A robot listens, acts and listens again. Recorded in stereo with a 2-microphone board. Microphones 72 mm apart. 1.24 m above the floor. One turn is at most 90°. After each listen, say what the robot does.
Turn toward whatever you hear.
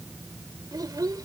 Turn 60° right.
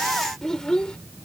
Turn 10° left.
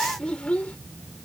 Turn 20° left.
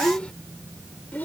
Turn 25° left.
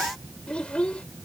Turn 15° left.
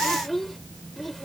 Found it: a child speaking, straight ahead.